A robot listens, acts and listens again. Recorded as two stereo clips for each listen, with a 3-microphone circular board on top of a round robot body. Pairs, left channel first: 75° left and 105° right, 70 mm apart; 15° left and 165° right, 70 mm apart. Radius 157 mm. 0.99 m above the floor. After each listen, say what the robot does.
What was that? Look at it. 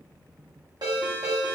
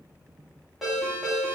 Turn 75° right.
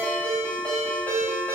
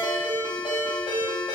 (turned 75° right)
Turn 10° left.
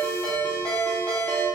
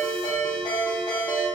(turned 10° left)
Found it: a ringtone, straight ahead.